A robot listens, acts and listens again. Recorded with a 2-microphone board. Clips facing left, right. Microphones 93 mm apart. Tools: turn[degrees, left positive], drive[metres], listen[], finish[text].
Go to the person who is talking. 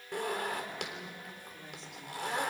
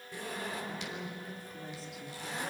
Action: turn[30]
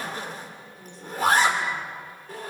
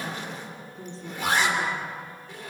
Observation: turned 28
Thought: So it is at 30° right.
Action: turn[-30]
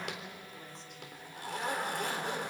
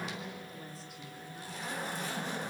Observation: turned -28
Action: drive[1.0]
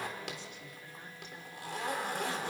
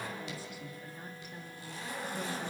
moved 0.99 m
Action: drive[1.0]
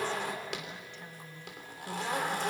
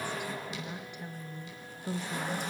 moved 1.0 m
Thought: The woman speaking is now 15° right.
Action: turn[-15]
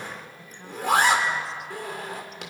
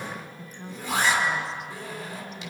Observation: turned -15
Action: drive[1.0]
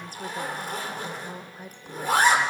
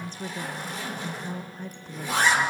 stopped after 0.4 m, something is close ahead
Thought: The woman speaking is now 10° left.
Action: turn[10]
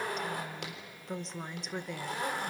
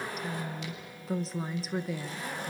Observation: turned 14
Action: finish[Arrived at the woman speaking, straight ahead.]